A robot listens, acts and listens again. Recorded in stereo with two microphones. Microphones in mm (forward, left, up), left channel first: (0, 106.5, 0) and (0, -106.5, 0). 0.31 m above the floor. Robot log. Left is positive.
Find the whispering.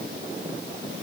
cmd idle
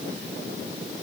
cmd idle
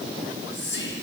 note: The whispering: about 60° left or 120° left.
cmd yaw +60
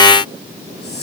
note: So it is at 55° left.
cmd yaw +55
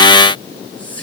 note: The whispering is now 10° left.
cmd yaw +10
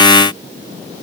cmd idle
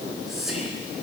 end: Facing the whispering.